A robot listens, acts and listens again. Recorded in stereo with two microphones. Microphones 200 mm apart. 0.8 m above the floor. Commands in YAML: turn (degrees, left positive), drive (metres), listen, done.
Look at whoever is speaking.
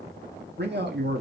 turn: -65
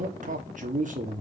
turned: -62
turn: -45
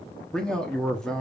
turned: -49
done: "Found it: a man speaking, straight ahead."